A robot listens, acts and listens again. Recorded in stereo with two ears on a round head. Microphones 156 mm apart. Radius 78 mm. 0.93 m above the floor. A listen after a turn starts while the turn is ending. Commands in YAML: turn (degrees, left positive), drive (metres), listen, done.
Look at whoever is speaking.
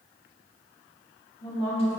turn: 35
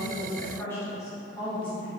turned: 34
turn: 30
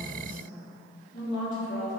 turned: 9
turn: 50
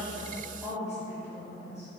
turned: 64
done: "Found it: a woman speaking, straight ahead, 1 to 2 m away."